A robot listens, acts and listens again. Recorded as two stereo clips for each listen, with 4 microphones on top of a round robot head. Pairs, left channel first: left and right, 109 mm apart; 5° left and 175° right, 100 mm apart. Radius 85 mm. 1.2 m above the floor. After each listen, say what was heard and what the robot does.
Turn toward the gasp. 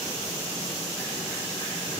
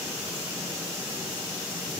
Keep listening.
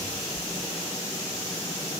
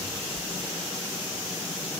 Keep listening.
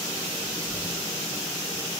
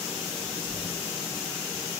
I can't make out a gasp to turn to.